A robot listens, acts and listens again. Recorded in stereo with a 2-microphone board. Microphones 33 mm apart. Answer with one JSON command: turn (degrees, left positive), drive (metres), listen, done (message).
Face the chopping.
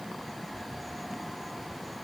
{"listen": true}
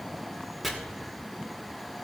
{"turn": 30}
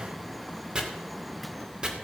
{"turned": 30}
{"turn": -30}
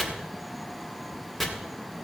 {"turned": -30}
{"turn": 10}
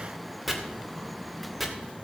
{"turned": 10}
{"done": "Facing the chopping."}